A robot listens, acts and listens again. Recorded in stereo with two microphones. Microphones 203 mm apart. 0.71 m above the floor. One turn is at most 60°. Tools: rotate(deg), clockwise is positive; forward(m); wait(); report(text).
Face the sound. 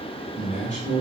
rotate(-60)
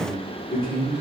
rotate(-50)
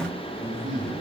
rotate(-25)
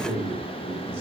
rotate(15)
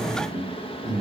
report("Found it: a man speaking, straight ahead, 1 to 2 m away.")